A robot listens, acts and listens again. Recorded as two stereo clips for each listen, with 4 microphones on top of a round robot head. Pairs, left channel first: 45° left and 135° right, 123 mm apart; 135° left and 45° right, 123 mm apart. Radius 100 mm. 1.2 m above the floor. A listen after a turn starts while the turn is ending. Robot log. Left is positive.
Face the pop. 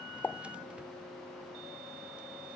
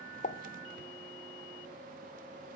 note: The pop: 120° left.
cmd yaw +120
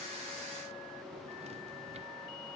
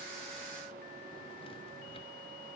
end: Facing where the pop came from. I can't hear it now.